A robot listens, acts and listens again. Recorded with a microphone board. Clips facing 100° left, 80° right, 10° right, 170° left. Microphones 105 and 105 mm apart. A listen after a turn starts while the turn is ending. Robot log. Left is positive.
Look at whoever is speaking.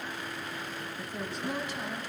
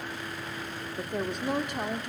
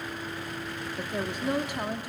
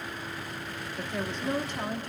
note: The woman speaking: 90° right.
cmd yaw -90
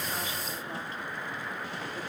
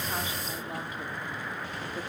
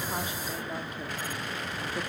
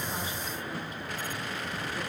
cmd idle
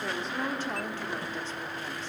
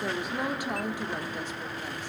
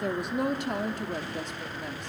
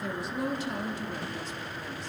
end: Facing the woman speaking.